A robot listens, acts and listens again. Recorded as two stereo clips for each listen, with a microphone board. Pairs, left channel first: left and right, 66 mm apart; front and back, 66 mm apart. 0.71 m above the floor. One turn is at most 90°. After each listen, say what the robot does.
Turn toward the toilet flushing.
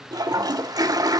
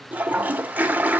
Turn 90° right.
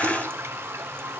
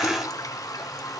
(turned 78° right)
Turn 35° right.
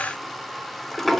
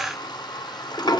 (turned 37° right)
Facing the toilet flushing.